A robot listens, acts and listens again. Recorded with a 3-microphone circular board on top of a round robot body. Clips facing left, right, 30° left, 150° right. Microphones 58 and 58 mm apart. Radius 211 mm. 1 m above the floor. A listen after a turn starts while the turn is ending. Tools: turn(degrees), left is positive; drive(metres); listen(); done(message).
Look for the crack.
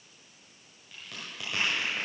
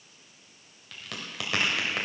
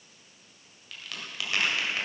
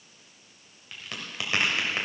turn(degrees=-85)
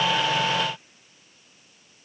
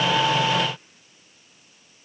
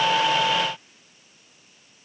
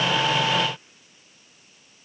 done("Facing where the crack came from. I can't hear it now.")